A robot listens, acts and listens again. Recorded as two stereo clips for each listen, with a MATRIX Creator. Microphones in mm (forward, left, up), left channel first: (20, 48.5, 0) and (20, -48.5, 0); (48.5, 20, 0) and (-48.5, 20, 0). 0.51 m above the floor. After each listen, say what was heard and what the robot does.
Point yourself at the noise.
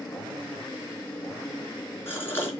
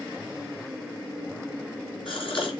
The gasp: 25° left. Turn 25° left.
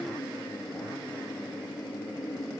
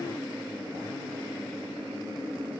Facing where the gasp came from. I can't hear it now.